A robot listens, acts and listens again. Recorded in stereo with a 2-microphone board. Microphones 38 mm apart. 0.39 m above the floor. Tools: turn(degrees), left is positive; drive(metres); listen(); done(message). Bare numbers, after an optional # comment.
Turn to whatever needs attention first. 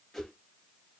listen()
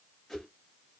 listen()
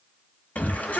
# The shout: about 50° left or 130° left.
turn(50)
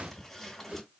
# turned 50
listen()
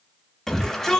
# So it is at 10° left.
turn(10)
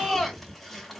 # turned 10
done("Facing the shout.")